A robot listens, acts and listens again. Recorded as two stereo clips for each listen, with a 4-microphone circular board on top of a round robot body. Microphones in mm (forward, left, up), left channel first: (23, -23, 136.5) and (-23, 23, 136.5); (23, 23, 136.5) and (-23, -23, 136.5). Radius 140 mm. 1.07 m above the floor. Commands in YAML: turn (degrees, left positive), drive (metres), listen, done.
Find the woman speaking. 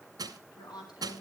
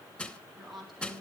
turn: -45
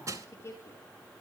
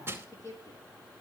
done: "Facing the woman speaking."